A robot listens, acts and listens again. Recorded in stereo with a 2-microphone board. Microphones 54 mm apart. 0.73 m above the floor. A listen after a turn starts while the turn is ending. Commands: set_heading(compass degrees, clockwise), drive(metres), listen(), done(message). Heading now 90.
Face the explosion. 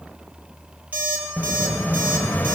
set_heading(55)
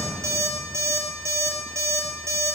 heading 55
listen()
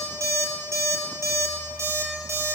done("I heard an explosion, but can't make it out now. It was about straight ahead or 110° left.")